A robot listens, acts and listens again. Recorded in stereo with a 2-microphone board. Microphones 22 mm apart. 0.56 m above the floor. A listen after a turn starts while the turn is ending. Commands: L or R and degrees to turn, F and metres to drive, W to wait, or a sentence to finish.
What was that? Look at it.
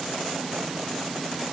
W
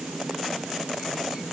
W
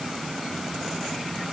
I can't make out anything.